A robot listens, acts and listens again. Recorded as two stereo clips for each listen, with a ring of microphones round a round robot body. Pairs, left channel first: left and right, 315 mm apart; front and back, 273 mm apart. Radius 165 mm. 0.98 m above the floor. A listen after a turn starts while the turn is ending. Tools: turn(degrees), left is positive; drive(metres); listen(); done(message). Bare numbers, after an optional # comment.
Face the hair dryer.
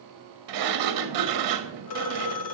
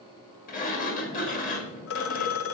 listen()
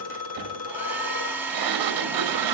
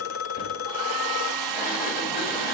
# The hair dryer: 175° right.
turn(-175)
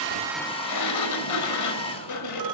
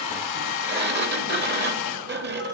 # The hair dryer is now 15° left.
turn(15)
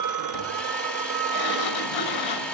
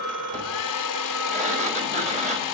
done("Facing the hair dryer.")